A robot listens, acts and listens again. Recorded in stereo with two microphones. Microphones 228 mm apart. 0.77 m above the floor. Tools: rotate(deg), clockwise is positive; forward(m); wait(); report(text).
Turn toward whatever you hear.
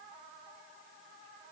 wait()
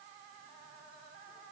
wait()
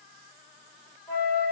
rotate(30)
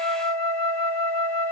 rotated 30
rotate(145)
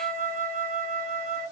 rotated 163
rotate(-15)
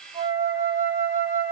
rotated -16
report("Found it: a flute, straight ahead.")